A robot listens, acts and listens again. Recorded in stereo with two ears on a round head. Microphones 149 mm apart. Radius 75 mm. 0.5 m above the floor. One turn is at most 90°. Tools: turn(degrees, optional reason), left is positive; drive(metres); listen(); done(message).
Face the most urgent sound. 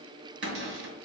listen()
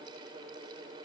listen()
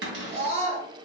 turn(degrees=-35, reason="The scream: about 35° right or 145° right.")
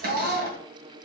turn(degrees=-90, reason="So it is at 110° right.")
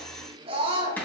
turn(degrees=-40, reason="The scream is now 40° right.")
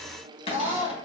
turn(degrees=-10, reason="The scream is now 10° right.")
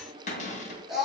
done("Facing the scream.")